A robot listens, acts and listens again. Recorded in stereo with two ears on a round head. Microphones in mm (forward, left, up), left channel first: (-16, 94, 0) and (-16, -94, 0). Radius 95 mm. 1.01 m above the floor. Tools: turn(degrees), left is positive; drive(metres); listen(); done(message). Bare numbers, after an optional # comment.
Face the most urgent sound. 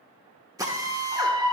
# The scream: about 20° right or 160° right.
turn(-20)
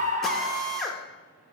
# So it is at 140° right.
turn(-140)
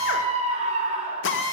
# The scream is now 35° right.
turn(-35)
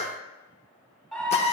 done("Found it: a scream, straight ahead, 1 to 2 m away.")